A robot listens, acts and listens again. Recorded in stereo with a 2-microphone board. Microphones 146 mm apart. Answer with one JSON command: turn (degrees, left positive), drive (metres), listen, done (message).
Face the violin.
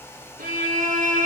{"turn": -90}
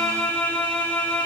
{"turn": 10}
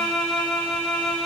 {"done": "Facing the violin."}